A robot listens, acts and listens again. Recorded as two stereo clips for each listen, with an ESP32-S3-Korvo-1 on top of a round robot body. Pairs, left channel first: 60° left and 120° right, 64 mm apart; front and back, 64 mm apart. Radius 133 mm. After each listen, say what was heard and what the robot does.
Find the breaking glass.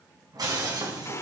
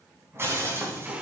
The breaking glass: 130° right. Turn 130° right.
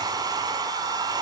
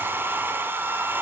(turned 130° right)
I heard breaking glass from this way, but can't make it out now.